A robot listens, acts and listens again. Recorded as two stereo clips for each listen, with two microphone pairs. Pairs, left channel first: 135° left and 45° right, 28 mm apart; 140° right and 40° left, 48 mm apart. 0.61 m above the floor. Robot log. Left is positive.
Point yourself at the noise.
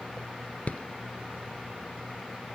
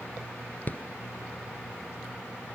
note: The rattle: 170° left.
cmd yaw +170
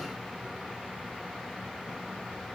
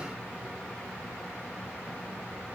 cmd idle
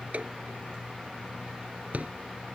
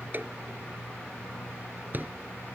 note: The rattle is now 10° right.
cmd yaw -10
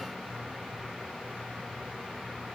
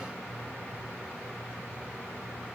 cmd idle
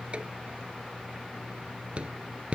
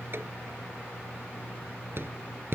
end: Facing the rattle.